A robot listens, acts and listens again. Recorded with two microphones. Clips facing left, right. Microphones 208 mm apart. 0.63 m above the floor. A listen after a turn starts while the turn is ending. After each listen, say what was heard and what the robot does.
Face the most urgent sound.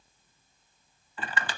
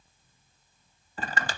Keep listening.
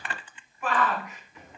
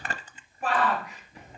The shout: about 35° right or 145° right. Turn 35° right.
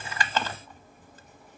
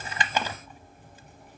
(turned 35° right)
Keep listening.
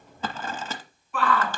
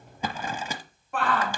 So it is at 110° right. Turn 110° right.
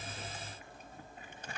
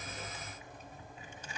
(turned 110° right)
Keep listening.
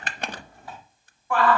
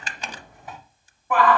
The shout is now 20° right. Turn 20° right.
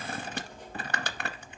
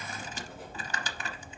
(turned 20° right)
Keep listening.
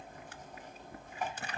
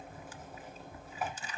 Keep listening.
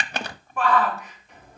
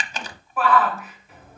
Facing the shout.